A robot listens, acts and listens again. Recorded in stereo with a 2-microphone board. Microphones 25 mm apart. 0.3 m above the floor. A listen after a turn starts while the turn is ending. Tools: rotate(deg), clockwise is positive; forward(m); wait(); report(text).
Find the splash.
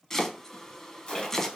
rotate(-40)
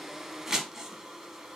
wait()
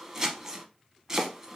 report("I heard a splash, but can't make it out now. It was about straight ahead or 100° left.")